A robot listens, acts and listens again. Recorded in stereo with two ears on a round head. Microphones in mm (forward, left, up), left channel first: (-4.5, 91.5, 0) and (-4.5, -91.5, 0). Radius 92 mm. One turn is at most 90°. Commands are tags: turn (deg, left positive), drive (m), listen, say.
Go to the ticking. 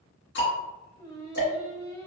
<turn deg="55"/>
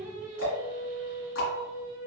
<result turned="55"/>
<turn deg="70"/>
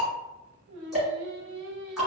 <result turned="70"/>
<drive m="1.0"/>
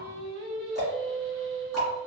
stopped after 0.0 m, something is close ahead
<say>Blocked. The ticking is further on, straight ahead.</say>